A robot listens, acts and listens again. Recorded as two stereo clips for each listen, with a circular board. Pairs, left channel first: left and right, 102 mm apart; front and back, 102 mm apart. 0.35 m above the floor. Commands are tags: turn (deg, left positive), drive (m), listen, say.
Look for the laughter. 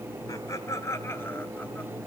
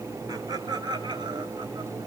<turn deg="150"/>
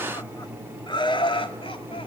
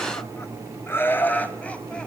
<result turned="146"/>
<turn deg="75"/>
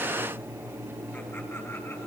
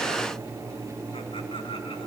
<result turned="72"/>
<listen/>
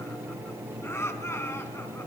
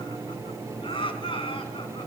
<turn deg="25"/>
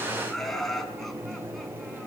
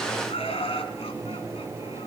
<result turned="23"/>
<say>Facing the laughter, 2 to 4 m away.</say>